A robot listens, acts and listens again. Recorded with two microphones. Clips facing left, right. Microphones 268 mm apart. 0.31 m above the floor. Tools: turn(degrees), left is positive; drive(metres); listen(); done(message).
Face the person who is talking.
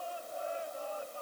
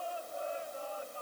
listen()
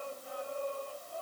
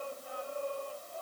listen()
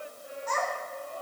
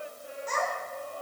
turn(degrees=-30)
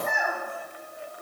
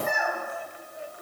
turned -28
done("Facing the child speaking.")